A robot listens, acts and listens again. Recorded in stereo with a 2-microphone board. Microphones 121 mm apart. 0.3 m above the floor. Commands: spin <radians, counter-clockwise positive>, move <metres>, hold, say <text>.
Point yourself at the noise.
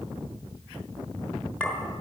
spin 0.52
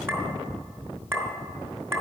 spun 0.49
spin -0.35
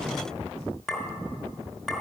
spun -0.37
say Facing the clink, 2 to 4 m away.